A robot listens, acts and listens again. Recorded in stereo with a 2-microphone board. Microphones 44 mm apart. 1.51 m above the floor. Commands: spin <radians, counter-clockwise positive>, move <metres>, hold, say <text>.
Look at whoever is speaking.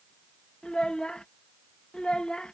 spin 0.35
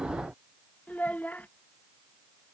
spin 2.44
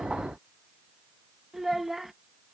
say Found it: a child speaking, straight ahead.